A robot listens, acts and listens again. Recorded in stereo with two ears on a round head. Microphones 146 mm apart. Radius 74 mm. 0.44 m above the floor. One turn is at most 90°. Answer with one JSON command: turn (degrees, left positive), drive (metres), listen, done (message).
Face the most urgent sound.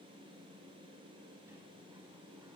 {"listen": true}
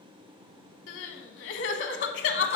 {"turn": 75}
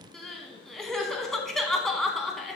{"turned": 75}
{"done": "Found it: crying, straight ahead."}